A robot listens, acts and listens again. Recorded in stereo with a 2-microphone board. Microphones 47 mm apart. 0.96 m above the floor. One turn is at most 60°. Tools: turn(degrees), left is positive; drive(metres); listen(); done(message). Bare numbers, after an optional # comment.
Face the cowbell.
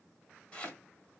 listen()
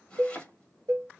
turn(-60)
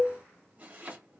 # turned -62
# So it is at 30° right.
turn(-30)
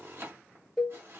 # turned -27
done("Facing the cowbell, under 1 m away.")